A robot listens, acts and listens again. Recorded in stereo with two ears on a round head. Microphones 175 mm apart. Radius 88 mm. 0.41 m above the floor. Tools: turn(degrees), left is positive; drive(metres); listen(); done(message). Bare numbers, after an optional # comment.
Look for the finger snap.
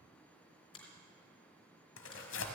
# The finger snap: about 30° left or 150° left.
turn(30)
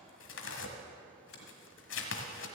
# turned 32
listen()
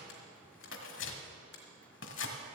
# So it is at 120° left.
turn(120)
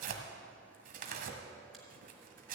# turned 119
listen()
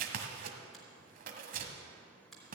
done("Facing the finger snap, 2 to 4 m away.")